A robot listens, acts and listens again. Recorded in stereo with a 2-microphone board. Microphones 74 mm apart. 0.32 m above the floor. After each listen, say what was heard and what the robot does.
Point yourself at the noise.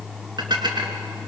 The dishes clattering: about 70° right or 110° right. Turn 70° right.
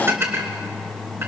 So it is at 35° right. Turn 35° right.
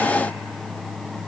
Keep listening.
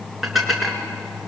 Facing the dishes clattering, 2 to 4 m away.